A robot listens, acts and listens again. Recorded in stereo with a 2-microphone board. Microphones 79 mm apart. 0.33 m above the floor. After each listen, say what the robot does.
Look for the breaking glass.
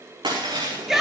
Turn 90° right.
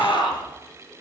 I heard breaking glass from this way, but can't make it out now.